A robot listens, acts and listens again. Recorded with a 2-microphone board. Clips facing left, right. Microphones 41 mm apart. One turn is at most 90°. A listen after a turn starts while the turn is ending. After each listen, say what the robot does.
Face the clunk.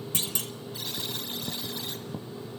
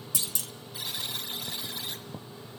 Turn 45° left.
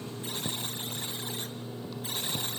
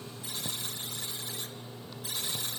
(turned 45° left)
Keep listening.
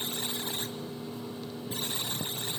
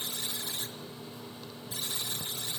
I heard a clunk, but can't make it out now. It was about straight ahead or 90° left.